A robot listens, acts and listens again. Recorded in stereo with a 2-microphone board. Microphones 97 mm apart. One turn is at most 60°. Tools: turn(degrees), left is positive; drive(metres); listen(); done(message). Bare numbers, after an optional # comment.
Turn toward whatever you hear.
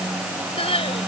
turn(60)
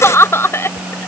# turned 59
# So it is at 25° left.
turn(25)
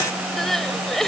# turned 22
done("Facing the crying.")